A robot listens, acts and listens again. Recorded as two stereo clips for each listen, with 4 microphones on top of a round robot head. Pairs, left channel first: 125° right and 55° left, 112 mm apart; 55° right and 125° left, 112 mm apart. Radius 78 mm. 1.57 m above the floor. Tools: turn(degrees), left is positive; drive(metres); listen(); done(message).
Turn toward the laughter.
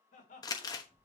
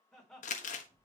turn(degrees=-145)
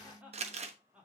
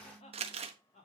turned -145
turn(degrees=-25)
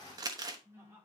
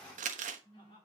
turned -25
turn(degrees=-10)
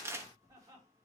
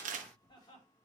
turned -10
listen()
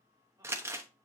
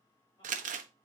listen()
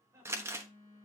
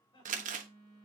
done("Found it: laughter, straight ahead.")